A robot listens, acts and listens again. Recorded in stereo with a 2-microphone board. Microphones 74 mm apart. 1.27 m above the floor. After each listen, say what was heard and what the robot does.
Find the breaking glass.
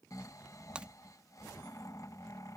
Turn 30° right.
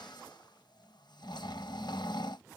Keep listening.
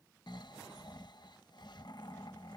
I heard breaking glass, but can't make it out now. It was about 15° left or 135° right.